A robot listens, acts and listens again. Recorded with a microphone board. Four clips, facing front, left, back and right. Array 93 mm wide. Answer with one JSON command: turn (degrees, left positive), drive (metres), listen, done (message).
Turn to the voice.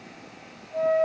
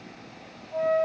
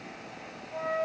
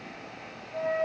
{"listen": true}
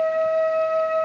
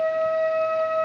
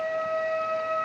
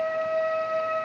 {"listen": true}
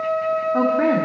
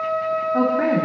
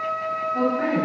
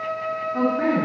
{"turn": 40}
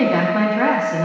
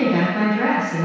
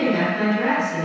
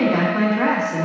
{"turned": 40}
{"done": "Found it: a woman speaking, straight ahead."}